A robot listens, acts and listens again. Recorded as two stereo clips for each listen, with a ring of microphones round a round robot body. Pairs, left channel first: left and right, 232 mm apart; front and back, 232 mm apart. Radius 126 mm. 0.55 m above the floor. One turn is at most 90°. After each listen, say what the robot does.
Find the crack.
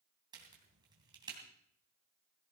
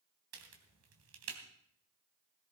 Turn 90° right.
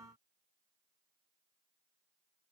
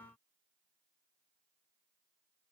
Turn 75° right.
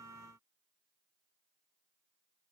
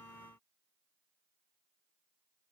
Facing where the crack came from. I can't hear it now.